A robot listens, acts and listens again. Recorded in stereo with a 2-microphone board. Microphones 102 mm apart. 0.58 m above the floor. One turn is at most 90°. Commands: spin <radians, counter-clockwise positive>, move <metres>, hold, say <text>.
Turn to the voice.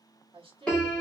spin -1.05
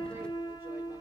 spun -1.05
hold
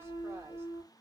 hold
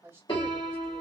spin -0.52
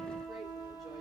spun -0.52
hold
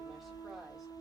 hold
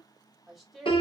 say Found it: a woman speaking, straight ahead, 1 to 2 m away.